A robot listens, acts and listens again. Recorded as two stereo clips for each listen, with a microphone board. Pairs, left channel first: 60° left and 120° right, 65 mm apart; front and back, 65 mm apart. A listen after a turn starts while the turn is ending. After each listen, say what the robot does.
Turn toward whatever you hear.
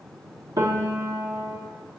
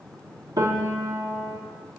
Turn 155° right.
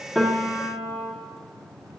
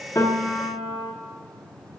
Facing the piano, 1 to 2 m away.